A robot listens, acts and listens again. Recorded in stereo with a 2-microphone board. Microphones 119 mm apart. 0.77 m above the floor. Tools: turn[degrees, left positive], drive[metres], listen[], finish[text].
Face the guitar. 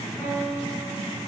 Action: turn[30]
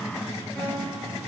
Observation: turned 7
Action: listen[]
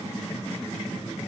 Action: listen[]
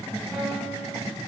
Action: finish[I heard a guitar, but can't make it out now. It was about 5° left or 160° left.]